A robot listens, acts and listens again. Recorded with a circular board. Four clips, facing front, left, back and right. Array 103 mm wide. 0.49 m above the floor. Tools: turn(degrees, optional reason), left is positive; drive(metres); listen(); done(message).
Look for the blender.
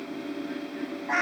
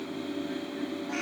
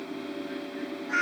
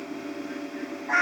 listen()
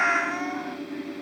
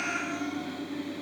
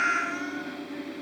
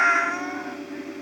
listen()
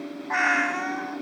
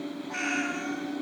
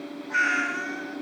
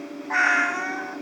done("I can't make out a blender to turn to.")